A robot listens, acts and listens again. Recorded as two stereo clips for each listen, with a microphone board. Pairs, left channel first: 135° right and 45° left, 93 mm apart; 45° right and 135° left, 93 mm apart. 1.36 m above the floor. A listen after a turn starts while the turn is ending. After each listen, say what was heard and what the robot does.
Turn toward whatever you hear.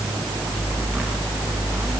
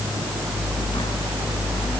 Keep listening.
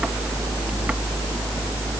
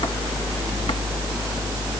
Keep listening.
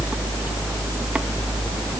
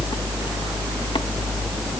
I can't make out anything to turn to.